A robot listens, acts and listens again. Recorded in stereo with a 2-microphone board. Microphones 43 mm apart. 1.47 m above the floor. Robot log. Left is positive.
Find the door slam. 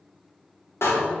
cmd yaw +90
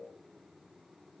end: Facing where the door slam came from. I can't hear it now.